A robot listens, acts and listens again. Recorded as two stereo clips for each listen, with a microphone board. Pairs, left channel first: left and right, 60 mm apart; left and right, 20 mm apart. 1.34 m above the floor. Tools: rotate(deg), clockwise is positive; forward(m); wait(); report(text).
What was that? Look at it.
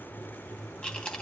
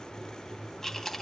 rotate(-20)
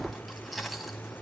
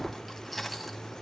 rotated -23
report("Found it: chewing, straight ahead, 2 to 4 m away.")